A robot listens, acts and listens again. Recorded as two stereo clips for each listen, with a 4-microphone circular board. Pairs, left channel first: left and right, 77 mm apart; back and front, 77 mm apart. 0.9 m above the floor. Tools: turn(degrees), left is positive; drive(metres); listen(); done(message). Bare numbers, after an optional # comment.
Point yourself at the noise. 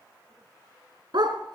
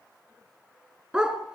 # The dog barking: 80° right.
turn(-80)
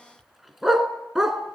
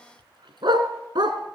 done("Facing the dog barking, 2 to 4 m away.")